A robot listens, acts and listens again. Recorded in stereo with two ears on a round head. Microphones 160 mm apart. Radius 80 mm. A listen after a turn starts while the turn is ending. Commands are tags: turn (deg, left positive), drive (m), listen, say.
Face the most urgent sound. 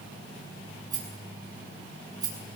<listen/>
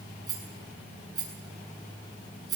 <listen/>
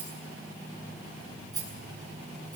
<say>I can't make out anything urgent, only a rattle.</say>